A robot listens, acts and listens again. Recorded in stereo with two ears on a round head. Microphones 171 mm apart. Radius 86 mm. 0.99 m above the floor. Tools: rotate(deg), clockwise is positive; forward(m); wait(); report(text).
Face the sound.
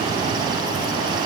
wait()
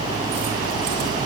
wait()
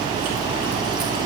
report("I can't make out anything.")